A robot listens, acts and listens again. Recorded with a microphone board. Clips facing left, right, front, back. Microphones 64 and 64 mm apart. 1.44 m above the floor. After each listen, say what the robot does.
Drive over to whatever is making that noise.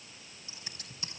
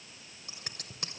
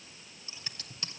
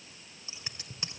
Turn 110° right.
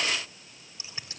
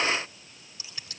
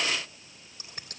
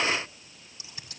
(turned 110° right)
Keep listening.
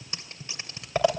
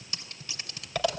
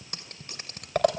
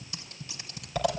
Turn 30° left.
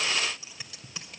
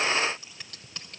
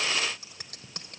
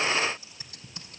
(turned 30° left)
Drive 1.0 m forward.
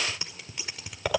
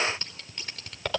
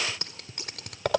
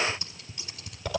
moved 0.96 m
Turn 10° left.
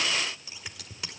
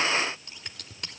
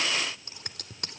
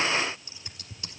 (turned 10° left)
Drive 1.0 m forward.
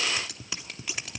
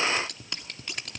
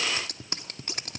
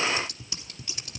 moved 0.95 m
Drive 1.0 m forward.
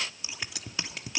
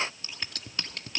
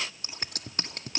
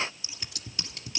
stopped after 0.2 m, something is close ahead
Turn 10° left.
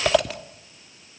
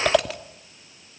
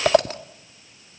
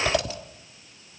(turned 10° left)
Arrived at the scissors, straight ahead.